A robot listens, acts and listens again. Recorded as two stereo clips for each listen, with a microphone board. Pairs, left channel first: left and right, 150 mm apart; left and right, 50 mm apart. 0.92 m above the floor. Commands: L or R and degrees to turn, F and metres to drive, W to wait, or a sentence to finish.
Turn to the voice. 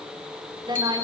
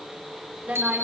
R30
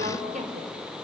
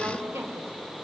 R120
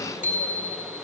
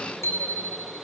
W
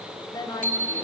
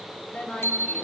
L25
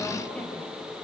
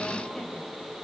L10
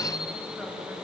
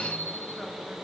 W
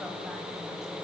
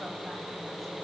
W
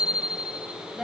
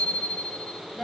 Found it: a woman speaking, straight ahead, over 4 m away.